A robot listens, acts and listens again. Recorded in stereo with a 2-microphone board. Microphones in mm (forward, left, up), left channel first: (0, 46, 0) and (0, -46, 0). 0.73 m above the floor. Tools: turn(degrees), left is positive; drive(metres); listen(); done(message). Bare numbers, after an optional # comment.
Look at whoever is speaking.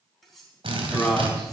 turn(30)
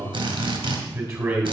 # So it is at 30° right.
turn(-30)
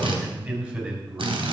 # The man speaking is now 15° right.
turn(-15)
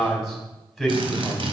done("Facing the man speaking.")